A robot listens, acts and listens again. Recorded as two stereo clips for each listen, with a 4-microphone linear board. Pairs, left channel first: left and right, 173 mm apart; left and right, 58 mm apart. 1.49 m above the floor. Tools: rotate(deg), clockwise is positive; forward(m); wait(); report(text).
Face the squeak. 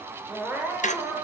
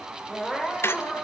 rotate(-45)
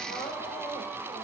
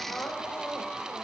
wait()
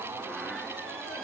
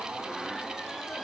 wait()
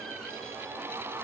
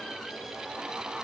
report("I heard a squeak, but can't make it out now. It was about straight ahead or 90° left.")